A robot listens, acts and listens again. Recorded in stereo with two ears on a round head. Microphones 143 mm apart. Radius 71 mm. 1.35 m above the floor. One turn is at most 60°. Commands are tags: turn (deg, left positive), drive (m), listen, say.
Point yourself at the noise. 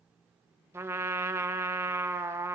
<turn deg="-30"/>
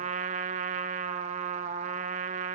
<turn deg="-60"/>
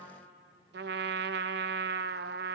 <turn deg="-60"/>
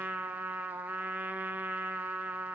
<turn deg="-10"/>
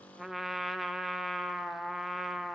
<say>Found it: a trumpet, straight ahead.</say>